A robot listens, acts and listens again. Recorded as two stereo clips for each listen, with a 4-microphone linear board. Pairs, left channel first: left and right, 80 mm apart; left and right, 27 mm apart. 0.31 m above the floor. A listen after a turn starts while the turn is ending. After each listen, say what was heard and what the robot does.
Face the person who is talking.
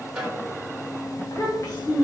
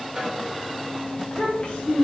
The child speaking: about 45° left or 135° left. Turn 45° left.
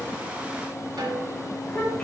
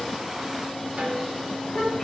So it is at 15° left. Turn 15° left.
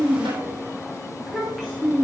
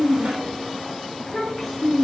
Found it: a child speaking, straight ahead, 1 to 2 m away.